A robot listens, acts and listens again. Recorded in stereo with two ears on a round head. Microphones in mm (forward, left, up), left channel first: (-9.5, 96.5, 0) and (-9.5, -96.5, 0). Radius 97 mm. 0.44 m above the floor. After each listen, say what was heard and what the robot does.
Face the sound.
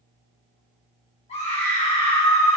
The scream: about 30° left or 150° left. Turn 30° left.
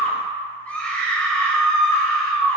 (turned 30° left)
So it is at 10° left. Turn 10° left.
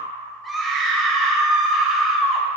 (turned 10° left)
Found it: a scream, straight ahead, 1 to 2 m away.